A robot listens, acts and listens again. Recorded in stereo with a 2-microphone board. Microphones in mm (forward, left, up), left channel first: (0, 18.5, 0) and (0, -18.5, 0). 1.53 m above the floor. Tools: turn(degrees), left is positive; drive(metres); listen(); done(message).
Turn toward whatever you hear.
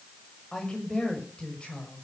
turn(degrees=25)
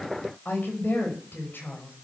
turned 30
turn(degrees=115)
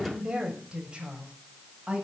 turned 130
turn(degrees=-30)
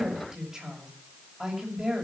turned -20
turn(degrees=-10)
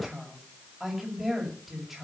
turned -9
done("Facing the woman speaking.")